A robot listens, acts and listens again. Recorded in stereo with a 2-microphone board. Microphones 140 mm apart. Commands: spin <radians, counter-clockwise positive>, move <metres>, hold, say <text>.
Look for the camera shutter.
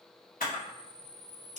spin 1.57
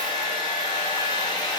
hold
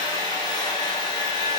hold
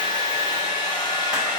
say I heard a camera shutter from this way, but can't make it out now.